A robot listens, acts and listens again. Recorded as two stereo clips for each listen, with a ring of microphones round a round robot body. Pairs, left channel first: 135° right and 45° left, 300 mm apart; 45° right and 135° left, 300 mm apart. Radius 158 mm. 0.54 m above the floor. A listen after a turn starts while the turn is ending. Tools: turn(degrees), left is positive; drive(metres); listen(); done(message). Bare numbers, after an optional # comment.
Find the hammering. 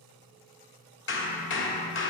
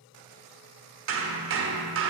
# The hammering: 175° left.
turn(175)
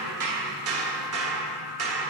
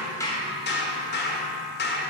# The hammering is now 10° left.
turn(10)
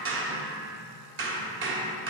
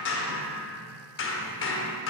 done("Found it: hammering, straight ahead.")